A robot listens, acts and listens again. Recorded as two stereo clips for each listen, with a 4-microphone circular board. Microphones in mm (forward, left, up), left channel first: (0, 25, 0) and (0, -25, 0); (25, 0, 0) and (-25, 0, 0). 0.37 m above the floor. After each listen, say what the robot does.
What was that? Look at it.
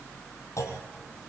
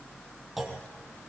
Turn 95° left.
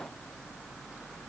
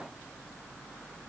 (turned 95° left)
I heard a clunk from this way, but can't make it out now.